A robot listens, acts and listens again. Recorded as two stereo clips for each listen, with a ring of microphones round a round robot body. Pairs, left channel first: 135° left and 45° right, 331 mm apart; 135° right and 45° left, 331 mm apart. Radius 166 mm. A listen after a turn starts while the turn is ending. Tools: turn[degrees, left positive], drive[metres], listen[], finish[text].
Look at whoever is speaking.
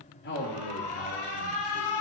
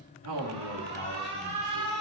Thought: The man speaking: 80° left.
Action: turn[80]
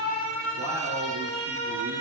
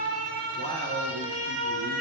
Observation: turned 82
Action: listen[]
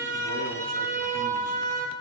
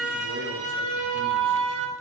Action: listen[]
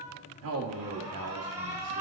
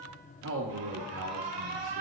Action: finish[Facing the man speaking.]